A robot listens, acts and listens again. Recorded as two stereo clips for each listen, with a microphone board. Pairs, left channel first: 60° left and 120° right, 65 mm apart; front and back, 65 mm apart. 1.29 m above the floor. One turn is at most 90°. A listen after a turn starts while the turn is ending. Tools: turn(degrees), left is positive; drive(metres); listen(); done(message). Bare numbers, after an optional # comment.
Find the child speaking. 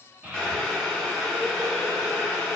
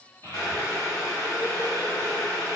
# The child speaking: 50° right.
turn(-50)
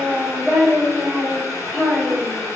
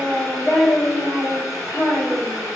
# The child speaking is now 10° right.
turn(-10)
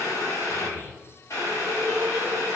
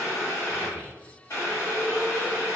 listen()
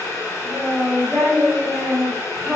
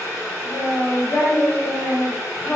done("Facing the child speaking.")